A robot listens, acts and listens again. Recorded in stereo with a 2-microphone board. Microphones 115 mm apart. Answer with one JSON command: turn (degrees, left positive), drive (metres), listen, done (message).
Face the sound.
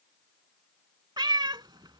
{"turn": -40}
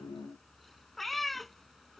{"done": "Found it: a cat meowing, straight ahead."}